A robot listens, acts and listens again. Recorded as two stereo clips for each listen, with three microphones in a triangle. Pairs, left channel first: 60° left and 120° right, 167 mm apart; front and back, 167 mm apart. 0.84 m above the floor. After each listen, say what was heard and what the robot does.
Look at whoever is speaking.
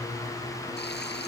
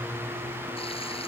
Keep listening.
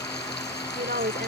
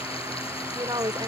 The woman speaking: 115° right. Turn 115° right.
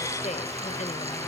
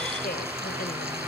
Keep listening.
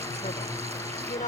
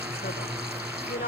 The woman speaking is now 20° left. Turn 20° left.
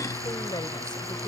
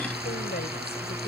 Keep listening.
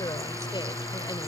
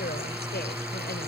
Keep listening.
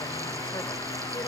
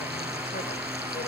Facing where the woman speaking came from. I can't hear it now.